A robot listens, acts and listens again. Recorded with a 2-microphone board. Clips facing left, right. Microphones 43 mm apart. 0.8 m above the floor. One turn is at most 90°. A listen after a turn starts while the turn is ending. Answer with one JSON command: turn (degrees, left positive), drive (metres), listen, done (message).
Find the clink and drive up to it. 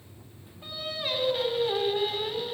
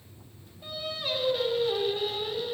{"listen": true}
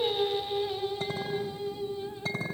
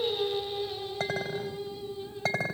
{"turn": -90}
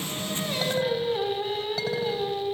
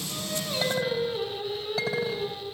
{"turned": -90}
{"listen": true}
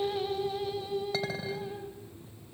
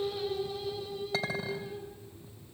{"drive": 1.0}
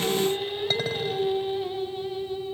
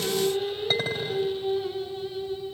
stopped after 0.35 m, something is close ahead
{"listen": true}
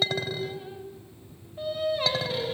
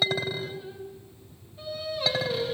{"done": "Blocked. The clink is further on, straight ahead."}